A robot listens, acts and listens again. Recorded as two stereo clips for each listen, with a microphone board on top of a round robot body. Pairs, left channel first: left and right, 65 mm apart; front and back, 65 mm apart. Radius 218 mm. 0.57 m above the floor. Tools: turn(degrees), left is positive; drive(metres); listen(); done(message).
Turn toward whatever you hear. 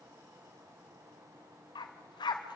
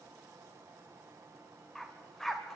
turn(degrees=85)
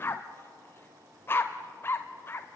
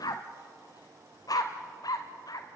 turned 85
turn(degrees=30)
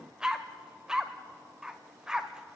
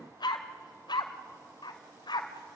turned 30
turn(degrees=-10)
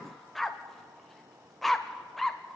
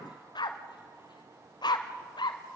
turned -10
done("Found it: a dog barking, straight ahead, under 1 m away.")